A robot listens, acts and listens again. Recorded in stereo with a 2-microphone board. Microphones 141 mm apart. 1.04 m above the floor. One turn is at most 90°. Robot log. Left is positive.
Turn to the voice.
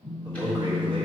note: The man speaking: about 35° right or 145° right.
cmd yaw -35
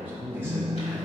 note: So it is at 15° right.
cmd yaw -15
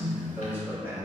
note: The man speaking is now 15° right.
cmd yaw -15
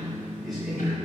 cmd idle
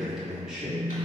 end: Facing the man speaking.